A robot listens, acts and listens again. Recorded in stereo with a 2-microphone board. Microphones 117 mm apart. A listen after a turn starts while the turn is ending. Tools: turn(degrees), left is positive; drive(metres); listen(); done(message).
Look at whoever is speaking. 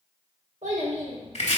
turn(degrees=-90)
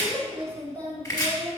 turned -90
turn(degrees=20)
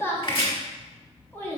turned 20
turn(degrees=20)
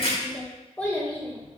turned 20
turn(degrees=20)
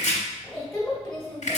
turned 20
done("Facing the child speaking, 1 to 2 m away.")